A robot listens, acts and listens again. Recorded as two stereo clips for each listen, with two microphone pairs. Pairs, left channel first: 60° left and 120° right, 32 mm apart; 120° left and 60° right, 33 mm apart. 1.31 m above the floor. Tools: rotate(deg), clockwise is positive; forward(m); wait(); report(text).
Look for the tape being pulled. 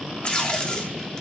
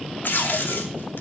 rotate(-125)
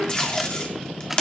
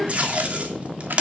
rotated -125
report("Found it: tape being pulled, straight ahead, 2 to 4 m away.")